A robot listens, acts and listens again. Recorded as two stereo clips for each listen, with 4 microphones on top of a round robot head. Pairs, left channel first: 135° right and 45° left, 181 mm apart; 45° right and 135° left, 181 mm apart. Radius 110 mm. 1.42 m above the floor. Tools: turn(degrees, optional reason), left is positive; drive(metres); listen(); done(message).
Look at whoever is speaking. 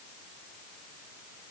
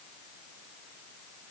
listen()
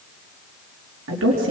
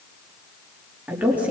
turn(degrees=55, reason="The woman speaking: 55° left.")
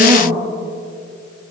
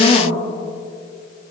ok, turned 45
done("Facing the woman speaking, 2 to 4 m away.")